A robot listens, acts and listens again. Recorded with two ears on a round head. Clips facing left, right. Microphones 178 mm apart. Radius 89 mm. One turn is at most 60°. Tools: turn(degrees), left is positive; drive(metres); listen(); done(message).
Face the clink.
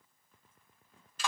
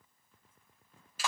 listen()
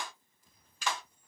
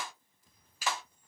listen()
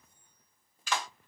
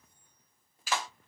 done("I can't make out a clink to turn to.")